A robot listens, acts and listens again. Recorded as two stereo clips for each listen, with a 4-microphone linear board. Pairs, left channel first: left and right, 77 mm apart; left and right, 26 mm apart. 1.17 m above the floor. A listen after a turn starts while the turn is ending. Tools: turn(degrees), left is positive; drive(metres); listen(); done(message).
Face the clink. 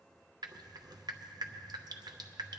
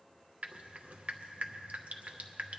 listen()
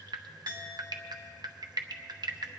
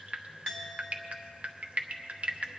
turn(degrees=20)
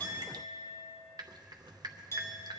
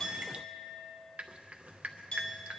turn(degrees=140)
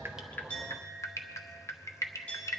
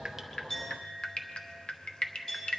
turn(degrees=15)
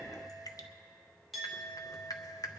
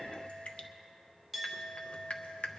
done("Found it: a clink, straight ahead.")